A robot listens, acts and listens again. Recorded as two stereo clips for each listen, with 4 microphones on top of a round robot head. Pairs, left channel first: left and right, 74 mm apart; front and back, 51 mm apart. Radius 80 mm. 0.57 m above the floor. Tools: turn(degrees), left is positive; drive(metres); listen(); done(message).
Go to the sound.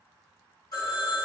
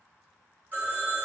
turn(degrees=130)
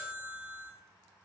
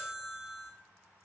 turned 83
turn(degrees=45)
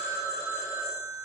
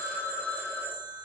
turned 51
drive(metres=1.0)
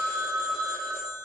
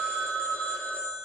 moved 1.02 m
drive(metres=1.0)
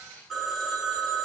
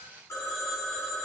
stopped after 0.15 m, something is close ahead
done("I am next to the phone ringing.")